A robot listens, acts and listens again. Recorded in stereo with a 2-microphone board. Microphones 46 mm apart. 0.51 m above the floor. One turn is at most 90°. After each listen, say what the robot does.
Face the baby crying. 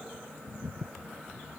Keep listening.
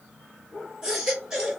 Turn 30° right.
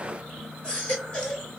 Turn 20° left.
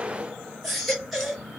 Facing the baby crying, 2 to 4 m away.